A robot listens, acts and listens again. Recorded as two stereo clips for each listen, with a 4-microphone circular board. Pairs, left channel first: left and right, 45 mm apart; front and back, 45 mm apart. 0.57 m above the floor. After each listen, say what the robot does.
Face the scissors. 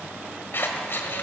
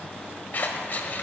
Turn 50° left.
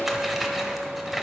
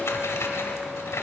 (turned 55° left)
Found it: scissors, straight ahead.